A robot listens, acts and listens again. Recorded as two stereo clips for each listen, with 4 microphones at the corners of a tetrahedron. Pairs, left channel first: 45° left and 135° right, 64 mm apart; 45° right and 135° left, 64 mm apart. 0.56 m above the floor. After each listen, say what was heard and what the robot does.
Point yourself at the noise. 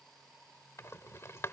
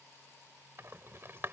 The rattle: 90° left. Turn 90° left.
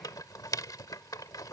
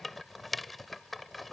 The rattle is now 45° left. Turn 45° left.
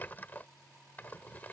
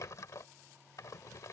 The rattle is now 15° right. Turn 15° right.
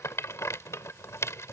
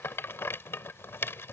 Found it: a rattle, straight ahead.